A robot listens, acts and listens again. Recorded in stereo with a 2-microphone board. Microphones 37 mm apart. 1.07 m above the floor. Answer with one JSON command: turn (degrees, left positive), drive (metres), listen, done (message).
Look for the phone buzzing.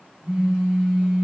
{"turn": -25}
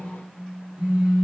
{"turn": -130}
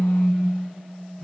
{"turn": 15}
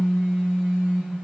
{"done": "Found it: a phone buzzing, straight ahead."}